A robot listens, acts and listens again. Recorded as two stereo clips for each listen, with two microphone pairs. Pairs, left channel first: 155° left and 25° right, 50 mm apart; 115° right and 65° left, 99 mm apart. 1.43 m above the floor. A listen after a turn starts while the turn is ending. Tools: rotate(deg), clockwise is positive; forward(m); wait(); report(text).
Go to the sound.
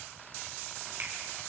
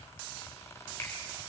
wait()
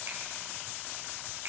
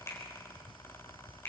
wait()
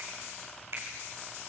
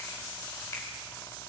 rotate(55)
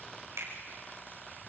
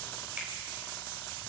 rotate(15)
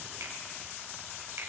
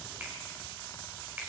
wait()
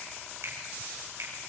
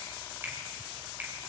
forward(1.0)
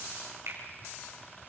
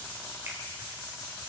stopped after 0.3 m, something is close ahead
wait()
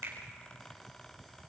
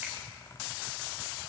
wait()
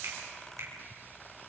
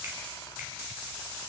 report("Facing where the finger snap came from. I can't hear it now. I did not reach it.")